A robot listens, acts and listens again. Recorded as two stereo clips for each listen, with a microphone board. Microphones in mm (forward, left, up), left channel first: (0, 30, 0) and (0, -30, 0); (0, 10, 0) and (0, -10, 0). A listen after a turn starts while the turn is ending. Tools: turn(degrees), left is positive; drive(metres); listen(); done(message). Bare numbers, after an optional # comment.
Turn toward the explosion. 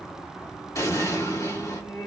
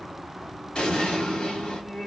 # The explosion: about 65° left or 115° left.
turn(65)
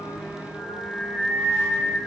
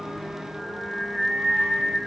listen()
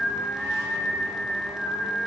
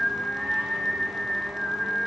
done("I heard an explosion, but can't make it out now. It was about straight ahead or 50° left.")